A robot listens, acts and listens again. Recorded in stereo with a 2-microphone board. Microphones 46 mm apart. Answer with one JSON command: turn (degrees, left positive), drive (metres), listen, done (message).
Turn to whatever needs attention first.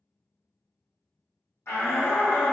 {"turn": 60}
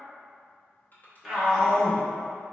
{"done": "Found it: a shout, straight ahead, 1 to 2 m away."}